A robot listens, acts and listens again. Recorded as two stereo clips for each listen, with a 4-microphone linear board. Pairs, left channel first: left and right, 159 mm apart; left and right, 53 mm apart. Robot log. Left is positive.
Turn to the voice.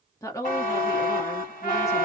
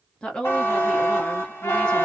note: The woman speaking: about 20° left or 160° left.
cmd yaw +20
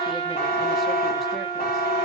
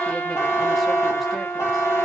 cmd idle
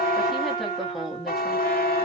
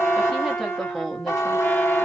end: Found it: a woman speaking, straight ahead.